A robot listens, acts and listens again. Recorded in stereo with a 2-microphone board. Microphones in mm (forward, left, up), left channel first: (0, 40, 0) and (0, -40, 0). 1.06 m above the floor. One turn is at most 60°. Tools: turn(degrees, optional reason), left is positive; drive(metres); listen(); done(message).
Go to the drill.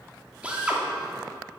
turn(degrees=-15, reason="The drill: about 15° right or 165° right.")
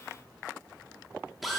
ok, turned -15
drive(metres=1.0)
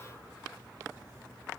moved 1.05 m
listen()
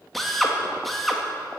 drive(metres=1.0)
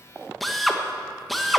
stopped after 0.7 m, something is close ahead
done("Arrived at the drill, straight ahead.")